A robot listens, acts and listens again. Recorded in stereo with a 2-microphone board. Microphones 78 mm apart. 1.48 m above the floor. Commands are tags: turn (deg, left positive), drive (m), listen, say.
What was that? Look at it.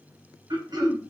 <turn deg="-65"/>
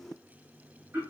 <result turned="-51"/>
<turn deg="-35"/>
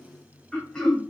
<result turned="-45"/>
<turn deg="10"/>
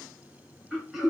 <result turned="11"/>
<say>Found it: throat clearing, straight ahead.</say>